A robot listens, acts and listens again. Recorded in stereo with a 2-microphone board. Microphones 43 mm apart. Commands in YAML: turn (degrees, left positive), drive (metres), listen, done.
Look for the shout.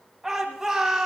turn: -30
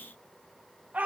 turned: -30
turn: -140
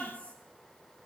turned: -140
listen: true
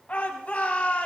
turn: 35
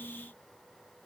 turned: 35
listen: true
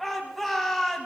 done: "Facing the shout."